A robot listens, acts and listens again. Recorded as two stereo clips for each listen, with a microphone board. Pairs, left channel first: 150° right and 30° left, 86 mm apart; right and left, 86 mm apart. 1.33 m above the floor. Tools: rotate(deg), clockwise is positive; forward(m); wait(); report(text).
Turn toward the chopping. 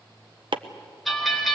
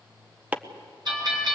rotate(-20)
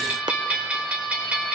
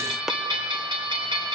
wait()
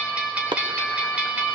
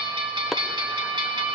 report("Found it: chopping, straight ahead.")